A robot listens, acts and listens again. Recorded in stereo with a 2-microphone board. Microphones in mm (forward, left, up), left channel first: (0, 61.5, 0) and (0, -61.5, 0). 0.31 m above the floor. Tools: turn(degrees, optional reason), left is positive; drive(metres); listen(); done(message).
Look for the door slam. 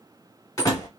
turn(degrees=30, reason="The door slam: about 30° left or 150° left.")
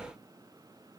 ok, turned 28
listen()
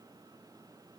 done("I heard a door slam, but can't make it out now. It was about straight ahead or 125° left.")